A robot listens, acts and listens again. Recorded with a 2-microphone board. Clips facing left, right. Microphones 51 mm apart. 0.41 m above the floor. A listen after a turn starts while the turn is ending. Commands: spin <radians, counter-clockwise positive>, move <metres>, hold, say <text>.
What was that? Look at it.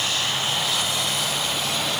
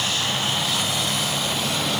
hold
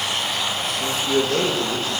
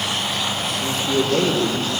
spin 0.79
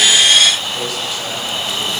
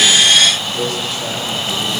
say Found it: a man speaking, straight ahead, over 4 m away.